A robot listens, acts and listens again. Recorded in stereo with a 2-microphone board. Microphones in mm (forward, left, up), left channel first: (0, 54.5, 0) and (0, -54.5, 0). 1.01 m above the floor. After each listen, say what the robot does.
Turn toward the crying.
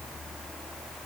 Keep listening.
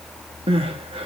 Turn 55° right.
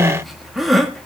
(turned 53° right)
Facing the crying, 1 to 2 m away.